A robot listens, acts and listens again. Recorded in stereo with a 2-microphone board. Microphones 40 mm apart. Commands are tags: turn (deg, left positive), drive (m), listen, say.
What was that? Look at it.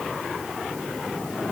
<listen/>
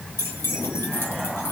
<turn deg="90"/>
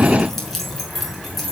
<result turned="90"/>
<say>Facing the keys jangling.</say>